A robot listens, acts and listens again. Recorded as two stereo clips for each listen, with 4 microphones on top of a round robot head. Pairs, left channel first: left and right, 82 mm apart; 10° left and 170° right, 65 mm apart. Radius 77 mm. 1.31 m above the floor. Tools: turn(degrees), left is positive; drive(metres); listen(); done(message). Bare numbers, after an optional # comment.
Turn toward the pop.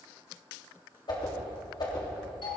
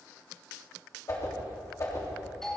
listen()
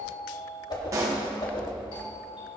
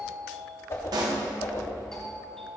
# The pop: 145° right.
turn(-145)
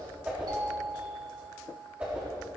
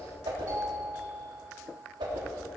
done("I heard a pop from this way, but can't make it out now.")